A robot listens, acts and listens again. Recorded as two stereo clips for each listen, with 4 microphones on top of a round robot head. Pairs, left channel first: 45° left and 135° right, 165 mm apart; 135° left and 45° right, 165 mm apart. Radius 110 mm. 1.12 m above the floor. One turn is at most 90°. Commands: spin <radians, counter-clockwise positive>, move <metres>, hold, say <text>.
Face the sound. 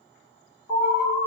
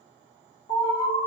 spin 1.48
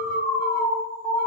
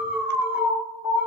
spin 0.61
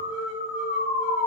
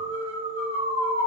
say Found it: an alarm, straight ahead.